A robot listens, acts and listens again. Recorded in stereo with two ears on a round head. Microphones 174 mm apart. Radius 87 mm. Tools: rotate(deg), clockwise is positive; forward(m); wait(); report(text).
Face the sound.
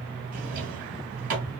rotate(45)
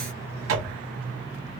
rotate(85)
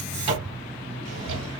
rotate(30)
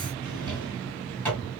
rotate(-10)
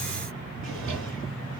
report("Found it: a drawer, straight ahead.")